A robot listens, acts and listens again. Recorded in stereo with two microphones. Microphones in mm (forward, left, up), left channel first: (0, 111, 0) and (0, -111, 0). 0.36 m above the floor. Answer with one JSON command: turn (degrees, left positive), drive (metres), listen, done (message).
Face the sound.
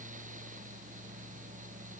{"listen": true}
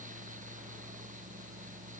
{"listen": true}
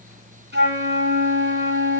{"turn": -50}
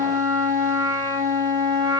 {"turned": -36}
{"turn": -20}
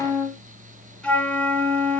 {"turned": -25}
{"done": "Found it: a flute, straight ahead, 2 to 4 m away."}